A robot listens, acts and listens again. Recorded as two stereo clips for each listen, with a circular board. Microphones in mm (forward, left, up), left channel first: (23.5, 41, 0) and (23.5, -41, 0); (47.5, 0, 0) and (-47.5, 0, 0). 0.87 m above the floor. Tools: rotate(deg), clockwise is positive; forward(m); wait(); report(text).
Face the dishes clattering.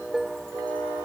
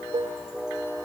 rotate(175)
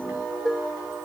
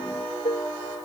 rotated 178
report("Found it: dishes clattering, straight ahead.")